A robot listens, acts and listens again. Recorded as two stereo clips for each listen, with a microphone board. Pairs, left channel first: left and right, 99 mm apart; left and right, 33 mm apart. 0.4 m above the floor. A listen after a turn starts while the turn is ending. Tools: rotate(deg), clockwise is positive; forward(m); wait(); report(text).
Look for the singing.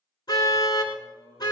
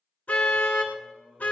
rotate(25)
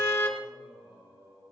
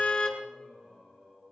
rotate(140)
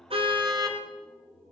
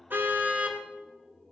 rotate(-15)
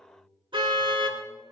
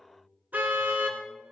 wait()
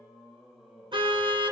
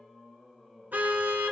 report("Found it: singing, straight ahead.")